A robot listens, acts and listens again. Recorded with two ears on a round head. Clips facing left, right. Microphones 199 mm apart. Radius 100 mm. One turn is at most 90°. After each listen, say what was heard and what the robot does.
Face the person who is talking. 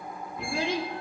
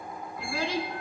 The child speaking: about 20° left or 160° left. Turn 20° left.
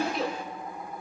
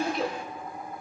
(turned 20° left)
Found it: a child speaking, straight ahead.